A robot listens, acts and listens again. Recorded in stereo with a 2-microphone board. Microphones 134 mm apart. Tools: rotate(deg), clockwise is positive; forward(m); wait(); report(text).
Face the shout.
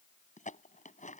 wait()
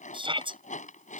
rotate(40)
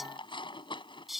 report("Facing the shout.")